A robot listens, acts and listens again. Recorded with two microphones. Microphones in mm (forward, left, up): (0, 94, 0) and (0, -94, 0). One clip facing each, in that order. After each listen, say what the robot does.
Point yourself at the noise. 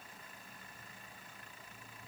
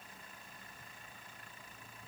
Keep listening.
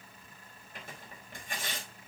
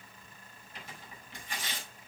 Turn 50° left.
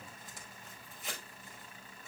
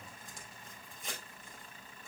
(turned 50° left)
Found it: tearing paper, straight ahead, over 4 m away.